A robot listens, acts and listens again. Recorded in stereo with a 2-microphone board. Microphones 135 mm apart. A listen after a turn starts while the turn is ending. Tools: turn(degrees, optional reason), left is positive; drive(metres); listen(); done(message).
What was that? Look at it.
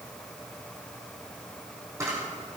turn(degrees=-20, reason="The camera shutter: about 20° right or 160° right.")
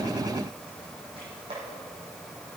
turn(degrees=-135, reason="So it is at 135° right.")
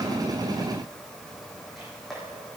done("Found it: a camera shutter, straight ahead, over 4 m away.")